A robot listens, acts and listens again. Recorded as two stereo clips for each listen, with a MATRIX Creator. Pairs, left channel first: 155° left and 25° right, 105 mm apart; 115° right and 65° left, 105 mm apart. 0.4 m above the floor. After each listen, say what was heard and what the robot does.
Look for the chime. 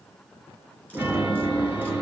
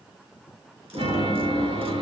The chime: 50° left. Turn 50° left.
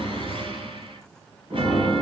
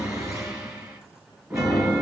The chime is now 10° left. Turn 10° left.
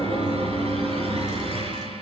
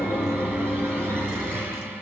Facing the chime, 2 to 4 m away.